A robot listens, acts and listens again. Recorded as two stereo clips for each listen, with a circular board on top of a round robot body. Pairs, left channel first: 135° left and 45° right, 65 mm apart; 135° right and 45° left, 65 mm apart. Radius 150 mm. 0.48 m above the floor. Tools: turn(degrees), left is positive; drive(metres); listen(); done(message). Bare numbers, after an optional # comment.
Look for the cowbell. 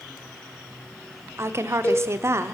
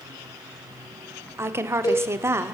# The cowbell: 155° right.
turn(-155)
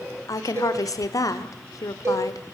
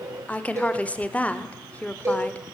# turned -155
done("Facing the cowbell, over 4 m away.")